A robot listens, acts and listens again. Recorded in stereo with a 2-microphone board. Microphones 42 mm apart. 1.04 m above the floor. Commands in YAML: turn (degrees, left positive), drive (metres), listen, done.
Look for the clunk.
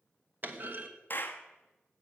turn: -45
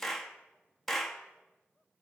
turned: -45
listen: true
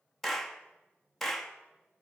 done: "I heard a clunk, but can't make it out now. It was about straight ahead or 90° right."